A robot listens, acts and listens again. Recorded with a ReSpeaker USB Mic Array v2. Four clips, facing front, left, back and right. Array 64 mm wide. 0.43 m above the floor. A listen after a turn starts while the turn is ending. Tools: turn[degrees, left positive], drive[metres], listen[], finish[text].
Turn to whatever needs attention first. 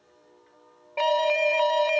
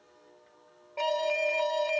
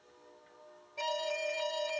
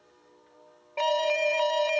Thought: The alarm: 20° right.
Action: turn[-20]
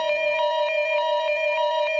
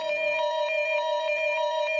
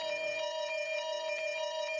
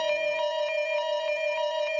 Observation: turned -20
Action: finish[Found it: an alarm, straight ahead.]